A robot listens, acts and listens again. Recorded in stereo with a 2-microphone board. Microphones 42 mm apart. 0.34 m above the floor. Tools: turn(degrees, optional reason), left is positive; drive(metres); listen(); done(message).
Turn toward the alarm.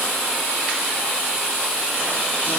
listen()
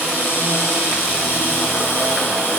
listen()
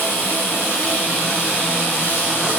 done("I can't make out an alarm to turn to.")